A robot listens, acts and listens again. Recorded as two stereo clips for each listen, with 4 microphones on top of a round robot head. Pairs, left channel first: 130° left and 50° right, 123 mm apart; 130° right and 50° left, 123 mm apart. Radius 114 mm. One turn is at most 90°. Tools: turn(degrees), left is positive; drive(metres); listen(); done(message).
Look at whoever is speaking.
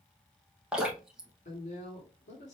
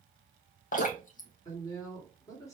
turn(degrees=90)
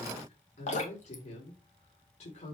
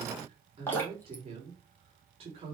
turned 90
turn(degrees=90)
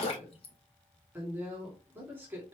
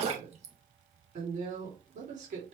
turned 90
turn(degrees=25)
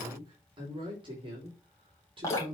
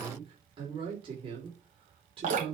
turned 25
done("Found it: a woman speaking, straight ahead, 2 to 4 m away.")